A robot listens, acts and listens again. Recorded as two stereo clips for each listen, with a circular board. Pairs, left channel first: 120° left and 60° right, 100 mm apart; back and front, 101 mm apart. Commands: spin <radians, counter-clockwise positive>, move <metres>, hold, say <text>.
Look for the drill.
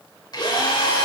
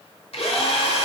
spin 2.97
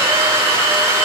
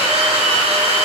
say Facing the drill.